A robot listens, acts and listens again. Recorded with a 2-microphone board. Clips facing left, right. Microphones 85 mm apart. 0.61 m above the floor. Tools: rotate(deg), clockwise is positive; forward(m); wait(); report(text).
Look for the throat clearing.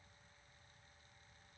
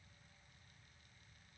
wait()
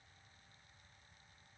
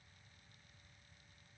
wait()
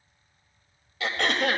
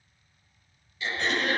rotate(-90)
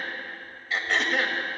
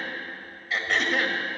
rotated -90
report("Found it: throat clearing, straight ahead.")